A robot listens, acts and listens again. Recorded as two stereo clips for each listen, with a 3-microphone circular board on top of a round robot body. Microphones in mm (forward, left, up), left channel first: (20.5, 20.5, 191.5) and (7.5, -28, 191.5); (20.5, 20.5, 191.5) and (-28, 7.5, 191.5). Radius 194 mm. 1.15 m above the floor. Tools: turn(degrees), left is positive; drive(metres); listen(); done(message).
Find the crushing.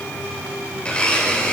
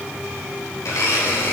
listen()
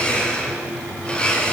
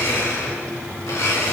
listen()
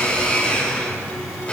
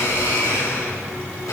done("I can't make out crushing, only a blender.")